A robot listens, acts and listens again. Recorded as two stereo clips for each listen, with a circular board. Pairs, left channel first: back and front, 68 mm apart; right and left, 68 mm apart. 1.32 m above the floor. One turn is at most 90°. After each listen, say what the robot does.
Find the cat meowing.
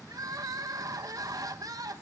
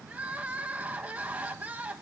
Keep listening.
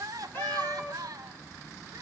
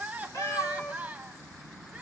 Turn 90° right.
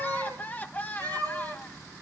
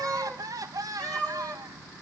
Turn 25° right.
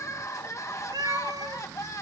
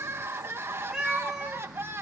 Found it: a cat meowing, straight ahead.